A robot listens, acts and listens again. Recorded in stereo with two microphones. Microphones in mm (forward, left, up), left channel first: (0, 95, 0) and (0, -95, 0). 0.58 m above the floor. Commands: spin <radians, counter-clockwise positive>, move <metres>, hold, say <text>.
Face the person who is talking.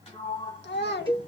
spin 1.13
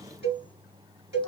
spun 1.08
hold
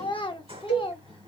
spin 0.52
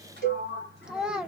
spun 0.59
say Found it: a child speaking, straight ahead.